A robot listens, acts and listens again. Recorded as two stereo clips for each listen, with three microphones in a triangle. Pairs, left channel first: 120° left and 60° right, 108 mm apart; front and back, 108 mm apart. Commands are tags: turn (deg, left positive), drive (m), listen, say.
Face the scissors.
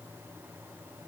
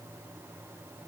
<listen/>
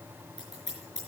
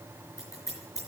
<turn deg="-60"/>
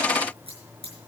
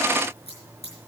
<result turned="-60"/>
<turn deg="-25"/>
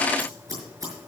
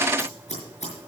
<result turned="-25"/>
<say>Found it: scissors, straight ahead.</say>